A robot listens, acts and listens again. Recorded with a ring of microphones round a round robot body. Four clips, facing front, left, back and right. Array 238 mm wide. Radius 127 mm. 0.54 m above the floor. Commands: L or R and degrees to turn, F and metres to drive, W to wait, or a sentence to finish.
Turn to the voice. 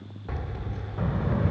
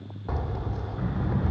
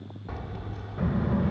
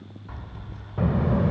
R90
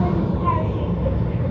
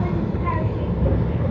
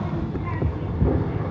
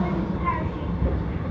L50
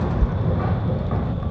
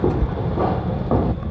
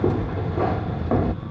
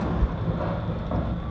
L35
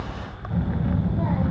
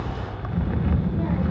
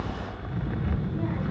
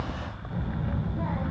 L25
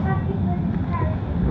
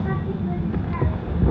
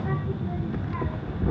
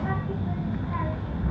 L10
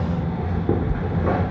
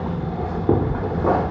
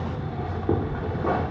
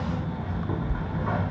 Facing the child speaking, 2 to 4 m away.